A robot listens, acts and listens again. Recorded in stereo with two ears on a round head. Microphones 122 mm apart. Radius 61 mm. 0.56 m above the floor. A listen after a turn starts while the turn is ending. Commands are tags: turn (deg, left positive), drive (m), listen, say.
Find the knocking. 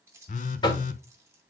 <turn deg="30"/>
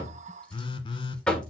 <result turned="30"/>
<turn deg="10"/>
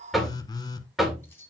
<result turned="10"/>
<say>Found it: knocking, straight ahead.</say>